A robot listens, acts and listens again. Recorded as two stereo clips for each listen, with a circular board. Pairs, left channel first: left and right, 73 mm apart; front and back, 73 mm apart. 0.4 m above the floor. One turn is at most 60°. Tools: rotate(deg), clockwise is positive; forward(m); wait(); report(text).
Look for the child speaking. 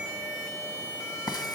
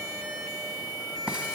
wait()
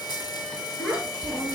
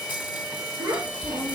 rotate(-60)
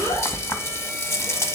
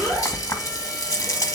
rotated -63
rotate(-60)
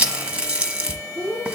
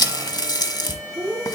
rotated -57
rotate(-30)
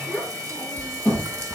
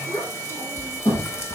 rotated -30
report("Facing the child speaking.")